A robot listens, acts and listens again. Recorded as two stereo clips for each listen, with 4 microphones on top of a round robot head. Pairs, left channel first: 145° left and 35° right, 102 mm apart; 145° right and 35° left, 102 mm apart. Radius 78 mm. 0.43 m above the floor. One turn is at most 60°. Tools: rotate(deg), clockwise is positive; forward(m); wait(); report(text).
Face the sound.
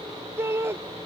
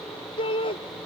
rotate(60)
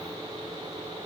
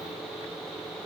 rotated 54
rotate(50)
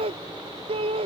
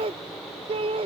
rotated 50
report("Found it: a shout, straight ahead.")